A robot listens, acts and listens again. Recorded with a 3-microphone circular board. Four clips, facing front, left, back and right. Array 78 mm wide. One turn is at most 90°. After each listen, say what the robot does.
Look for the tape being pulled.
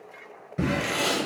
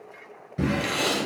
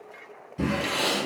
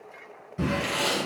Turn 80° left.
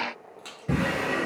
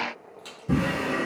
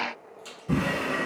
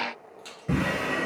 Keep listening.
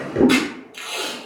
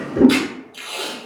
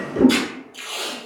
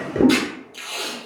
Found it: tape being pulled, straight ahead, 1 to 2 m away.